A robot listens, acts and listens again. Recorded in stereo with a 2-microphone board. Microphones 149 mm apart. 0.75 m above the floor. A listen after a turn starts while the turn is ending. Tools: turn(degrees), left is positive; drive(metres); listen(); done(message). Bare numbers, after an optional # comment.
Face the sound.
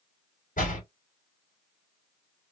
# The door slam: about 65° left or 115° left.
turn(65)
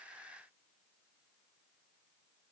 listen()
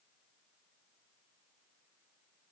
done("I heard a door slam, but can't make it out now. It was about straight ahead or 50° left.")